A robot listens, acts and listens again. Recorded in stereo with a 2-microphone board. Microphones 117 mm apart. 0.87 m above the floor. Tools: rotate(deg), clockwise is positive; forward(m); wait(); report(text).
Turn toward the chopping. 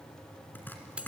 rotate(-15)
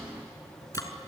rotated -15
rotate(-150)
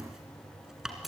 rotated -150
report("Found it: chopping, straight ahead.")